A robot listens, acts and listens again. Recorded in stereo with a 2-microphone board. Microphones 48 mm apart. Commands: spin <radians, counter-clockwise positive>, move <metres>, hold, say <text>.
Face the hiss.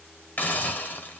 spin 0.61
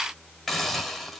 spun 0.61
say Facing the hiss.